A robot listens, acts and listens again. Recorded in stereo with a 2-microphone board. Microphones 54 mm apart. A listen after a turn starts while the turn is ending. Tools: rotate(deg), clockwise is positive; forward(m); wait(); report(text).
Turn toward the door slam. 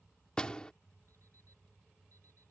rotate(-15)
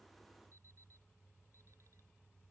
wait()
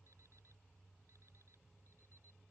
report("I heard a door slam, but can't make it out now. It was about straight ahead or 150° left.")